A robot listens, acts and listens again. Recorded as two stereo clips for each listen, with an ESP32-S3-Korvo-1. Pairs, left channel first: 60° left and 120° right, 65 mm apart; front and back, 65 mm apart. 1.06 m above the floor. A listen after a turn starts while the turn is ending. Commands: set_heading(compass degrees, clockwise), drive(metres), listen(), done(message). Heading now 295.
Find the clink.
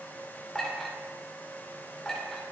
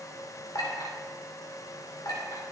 set_heading(320)
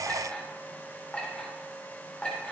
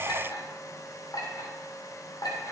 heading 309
set_heading(319)
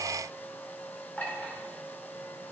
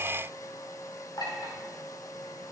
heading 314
done("Found it: a clink, straight ahead.")